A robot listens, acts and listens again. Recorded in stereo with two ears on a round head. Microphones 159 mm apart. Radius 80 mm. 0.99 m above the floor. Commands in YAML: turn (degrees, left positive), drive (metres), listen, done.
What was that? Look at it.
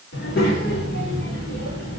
turn: 55
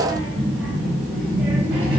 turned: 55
turn: -10
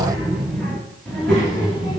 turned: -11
done: "Facing the child speaking."